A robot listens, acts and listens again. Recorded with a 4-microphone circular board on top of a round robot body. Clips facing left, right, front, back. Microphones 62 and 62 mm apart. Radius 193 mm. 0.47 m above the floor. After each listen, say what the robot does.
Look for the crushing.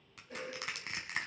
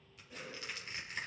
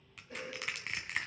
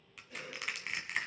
Turn 90° left.
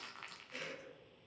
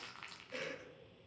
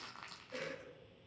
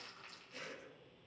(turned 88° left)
Facing the crushing, 1 to 2 m away.